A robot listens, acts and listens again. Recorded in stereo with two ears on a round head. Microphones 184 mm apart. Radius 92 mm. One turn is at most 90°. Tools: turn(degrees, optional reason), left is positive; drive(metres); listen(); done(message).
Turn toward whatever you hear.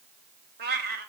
turn(degrees=-50, reason="The cat meowing: about 50° right or 130° right.")
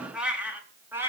turn(degrees=-10, reason="So it is at 10° right.")
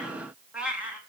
done("Facing the cat meowing, 2 to 4 m away.")